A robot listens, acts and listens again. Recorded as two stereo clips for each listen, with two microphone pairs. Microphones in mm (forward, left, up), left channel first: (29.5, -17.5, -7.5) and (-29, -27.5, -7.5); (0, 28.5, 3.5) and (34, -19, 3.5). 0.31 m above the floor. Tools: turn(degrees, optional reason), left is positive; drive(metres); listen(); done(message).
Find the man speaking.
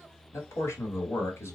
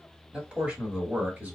done("Facing the man speaking, 1 to 2 m away.")